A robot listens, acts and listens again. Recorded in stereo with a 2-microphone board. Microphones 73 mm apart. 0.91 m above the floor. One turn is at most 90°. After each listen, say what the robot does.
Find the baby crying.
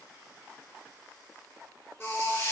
Keep listening.
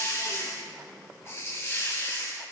Keep listening.
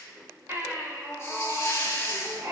Turn 40° right.
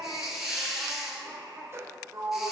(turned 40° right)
Turn 90° right.
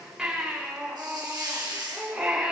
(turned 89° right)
Turn 10° right.
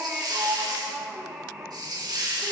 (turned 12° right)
Facing the baby crying.